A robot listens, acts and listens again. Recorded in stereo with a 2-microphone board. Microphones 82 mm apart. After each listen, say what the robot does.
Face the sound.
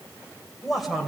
Turn 30° left.
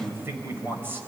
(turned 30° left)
Turn 25° right.
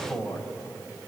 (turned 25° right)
Turn 10° left.
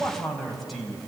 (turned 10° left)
Found it: a man speaking, straight ahead.